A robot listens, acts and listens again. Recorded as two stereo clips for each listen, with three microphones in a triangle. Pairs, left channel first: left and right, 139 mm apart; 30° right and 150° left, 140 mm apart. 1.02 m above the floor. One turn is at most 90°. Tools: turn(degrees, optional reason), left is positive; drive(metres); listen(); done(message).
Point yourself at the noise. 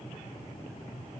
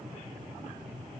listen()
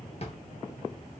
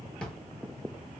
turn(degrees=50, reason="The drawer: 50° left.")
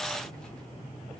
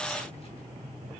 listen()
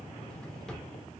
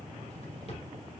done("Found it: a drawer, straight ahead, 1 to 2 m away.")